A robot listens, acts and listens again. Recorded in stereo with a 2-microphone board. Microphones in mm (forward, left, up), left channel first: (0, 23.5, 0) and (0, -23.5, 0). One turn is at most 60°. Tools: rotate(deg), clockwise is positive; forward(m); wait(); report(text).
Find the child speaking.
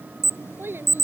rotate(60)
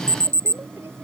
wait()
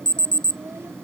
wait()
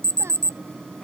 report("I heard a child speaking, but can't make it out now. It was about straight ahead or 60° right.")